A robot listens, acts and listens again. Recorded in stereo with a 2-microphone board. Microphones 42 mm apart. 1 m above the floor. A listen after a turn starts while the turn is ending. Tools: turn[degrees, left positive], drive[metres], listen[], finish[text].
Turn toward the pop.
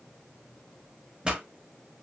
Thought: The pop: about 25° right or 155° right.
Action: turn[-25]
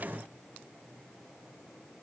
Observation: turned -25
Action: listen[]
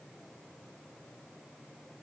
Action: finish[I heard a pop, but can't make it out now. It was about straight ahead or 130° right.]